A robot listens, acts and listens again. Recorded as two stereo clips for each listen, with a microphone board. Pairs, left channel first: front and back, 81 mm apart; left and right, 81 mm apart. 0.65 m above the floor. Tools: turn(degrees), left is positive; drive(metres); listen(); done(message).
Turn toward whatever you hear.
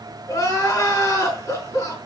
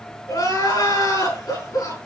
turn(degrees=50)
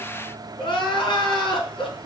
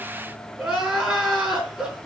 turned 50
turn(degrees=-10)
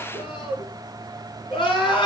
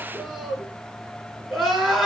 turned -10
done("Facing the crying, over 4 m away.")